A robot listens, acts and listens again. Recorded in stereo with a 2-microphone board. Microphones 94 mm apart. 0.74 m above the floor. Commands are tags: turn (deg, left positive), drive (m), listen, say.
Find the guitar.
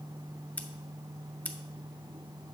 <listen/>
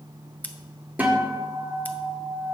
<turn deg="-15"/>
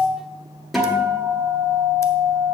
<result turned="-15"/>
<say>Facing the guitar.</say>